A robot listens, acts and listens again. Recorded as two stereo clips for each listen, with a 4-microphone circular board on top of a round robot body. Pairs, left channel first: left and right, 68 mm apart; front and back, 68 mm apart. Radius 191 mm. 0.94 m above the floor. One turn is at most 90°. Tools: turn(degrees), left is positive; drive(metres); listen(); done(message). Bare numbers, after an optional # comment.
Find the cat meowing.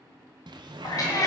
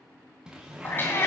# The cat meowing: 50° left.
turn(50)
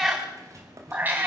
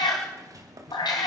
# The cat meowing is now 35° right.
turn(-35)
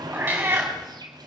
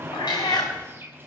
# The cat meowing is now 35° right.
turn(-35)
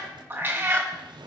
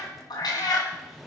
# The cat meowing is now 30° right.
turn(-30)
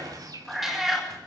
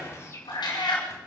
done("Facing the cat meowing.")